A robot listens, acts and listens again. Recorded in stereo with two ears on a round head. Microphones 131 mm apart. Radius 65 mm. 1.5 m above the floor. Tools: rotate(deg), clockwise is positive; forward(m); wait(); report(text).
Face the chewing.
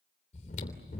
rotate(-55)
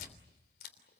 rotate(-70)
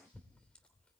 rotate(-10)
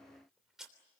report("Found it: chewing, straight ahead.")